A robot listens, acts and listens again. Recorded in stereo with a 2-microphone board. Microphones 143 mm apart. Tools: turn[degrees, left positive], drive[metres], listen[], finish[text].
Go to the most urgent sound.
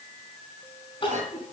Thought: The crying: about 40° left or 140° left.
Action: turn[40]
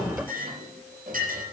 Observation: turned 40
Action: listen[]
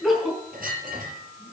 Action: drive[1.0]
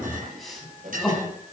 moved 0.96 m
Action: drive[1.0]
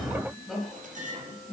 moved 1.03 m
Action: drive[1.0]
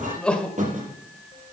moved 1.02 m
Thought: The crying is now 10° left.
Action: turn[10]
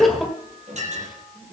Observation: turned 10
Action: drive[1.0]
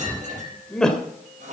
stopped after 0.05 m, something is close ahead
Thought: The crying is now 10° left.
Action: turn[10]
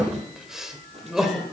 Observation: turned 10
Action: finish[Arrived at the crying, straight ahead.]